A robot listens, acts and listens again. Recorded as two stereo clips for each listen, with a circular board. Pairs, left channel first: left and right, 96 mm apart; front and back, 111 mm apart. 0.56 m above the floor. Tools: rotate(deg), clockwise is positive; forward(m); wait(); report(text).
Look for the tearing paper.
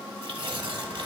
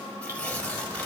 rotate(75)
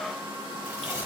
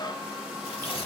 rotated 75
rotate(30)
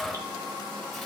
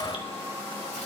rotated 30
wait()
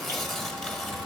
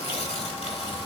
report("Found it: tearing paper, straight ahead, 1 to 2 m away.")